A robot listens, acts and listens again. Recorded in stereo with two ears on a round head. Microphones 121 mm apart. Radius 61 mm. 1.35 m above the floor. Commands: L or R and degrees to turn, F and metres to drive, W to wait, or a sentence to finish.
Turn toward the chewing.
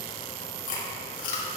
L60
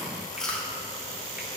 Found it: chewing, straight ahead, 2 to 4 m away.